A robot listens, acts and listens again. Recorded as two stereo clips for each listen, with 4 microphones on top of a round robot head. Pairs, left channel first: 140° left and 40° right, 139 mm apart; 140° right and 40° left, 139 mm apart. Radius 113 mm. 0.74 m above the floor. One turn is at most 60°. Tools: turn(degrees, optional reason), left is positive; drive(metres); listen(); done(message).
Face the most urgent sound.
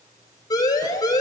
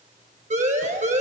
turn(degrees=60, reason="The siren: 75° left.")
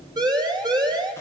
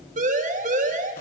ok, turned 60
turn(degrees=15, reason="The siren is now 15° left.")
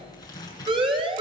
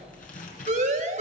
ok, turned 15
turn(degrees=10, reason="The siren is now 10° left.")
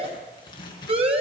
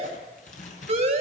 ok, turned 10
done("Facing the siren.")